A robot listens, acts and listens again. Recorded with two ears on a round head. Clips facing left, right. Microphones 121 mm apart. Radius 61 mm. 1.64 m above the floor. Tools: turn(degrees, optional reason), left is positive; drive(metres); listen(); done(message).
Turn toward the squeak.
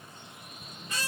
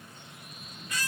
turn(degrees=25, reason="The squeak: about 25° left or 155° left.")
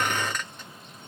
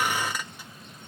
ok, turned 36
turn(degrees=-10, reason="So it is at 10° right.")
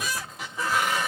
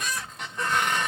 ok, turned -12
done("Facing the squeak.")